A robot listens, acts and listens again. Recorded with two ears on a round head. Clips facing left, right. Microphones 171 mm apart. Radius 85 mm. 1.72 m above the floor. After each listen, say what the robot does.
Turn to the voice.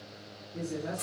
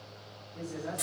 Turn 50° left.
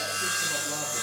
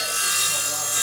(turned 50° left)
Keep listening.
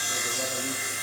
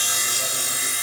Keep listening.
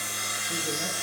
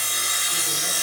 I heard a man speaking, but can't make it out now. It was about straight ahead or 80° left.